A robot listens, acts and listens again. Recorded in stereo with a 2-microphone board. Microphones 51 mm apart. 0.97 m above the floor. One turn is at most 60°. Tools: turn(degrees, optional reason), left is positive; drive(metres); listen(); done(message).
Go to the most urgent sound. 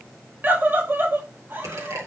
turn(degrees=-40, reason="The scream: about 40° right or 140° right.")
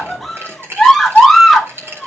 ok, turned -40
drive(metres=1.0)
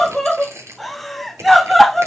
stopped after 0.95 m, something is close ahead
done("I am next to the scream.")